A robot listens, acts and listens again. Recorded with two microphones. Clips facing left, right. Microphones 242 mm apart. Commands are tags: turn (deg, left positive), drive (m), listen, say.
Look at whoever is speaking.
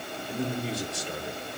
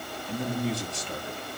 <turn deg="70"/>
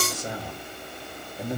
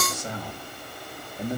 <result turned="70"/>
<turn deg="45"/>
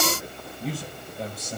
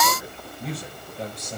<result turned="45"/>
<say>Found it: a man speaking, straight ahead.</say>